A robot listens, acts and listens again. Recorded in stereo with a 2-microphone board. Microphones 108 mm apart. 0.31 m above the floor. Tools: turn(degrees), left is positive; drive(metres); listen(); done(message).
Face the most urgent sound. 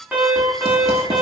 turn(degrees=-30)
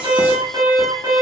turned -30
turn(degrees=-135)
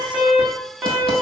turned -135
turn(degrees=-15)
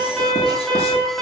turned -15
done("Facing the alarm.")